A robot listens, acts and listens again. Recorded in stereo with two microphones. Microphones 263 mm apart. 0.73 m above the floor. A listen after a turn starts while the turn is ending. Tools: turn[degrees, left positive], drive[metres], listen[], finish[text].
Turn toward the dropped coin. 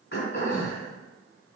Action: listen[]
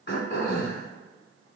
Action: listen[]
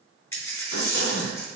Action: turn[30]
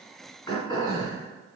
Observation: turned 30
Action: listen[]
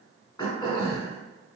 Action: finish[I heard a dropped coin, but can't make it out now. It was about 20° right or 140° left.]